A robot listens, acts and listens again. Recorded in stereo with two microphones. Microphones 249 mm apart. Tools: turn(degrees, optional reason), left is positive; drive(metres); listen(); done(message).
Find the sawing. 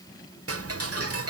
listen()
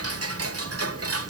listen()
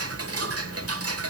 done("I can't make out sawing to turn to.")